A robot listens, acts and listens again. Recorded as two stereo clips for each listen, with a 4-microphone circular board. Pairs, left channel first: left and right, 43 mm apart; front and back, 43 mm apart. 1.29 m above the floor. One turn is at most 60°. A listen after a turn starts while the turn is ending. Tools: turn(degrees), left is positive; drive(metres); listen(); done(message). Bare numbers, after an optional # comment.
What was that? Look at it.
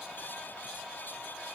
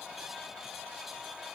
listen()
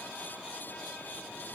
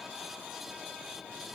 listen()
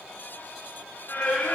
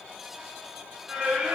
# The singing: 110° left.
turn(60)
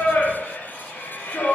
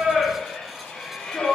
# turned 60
# The singing is now 65° left.
turn(60)
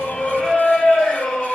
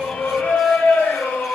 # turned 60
# The singing is now 20° left.
turn(20)
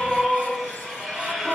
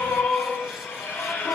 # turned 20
done("Facing the singing, 2 to 4 m away.")